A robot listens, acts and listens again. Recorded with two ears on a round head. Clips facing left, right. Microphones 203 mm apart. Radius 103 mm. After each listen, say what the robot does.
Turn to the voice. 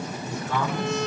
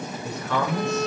Turn 55° right.
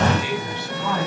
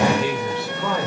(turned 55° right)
Turn 70° right.
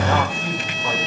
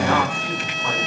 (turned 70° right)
Keep listening.
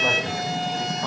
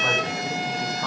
Keep listening.
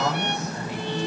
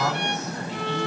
Turn 15° left.
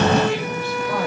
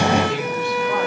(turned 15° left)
Keep listening.
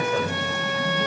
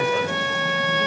Keep listening.
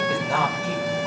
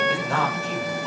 Found it: a man speaking, straight ahead.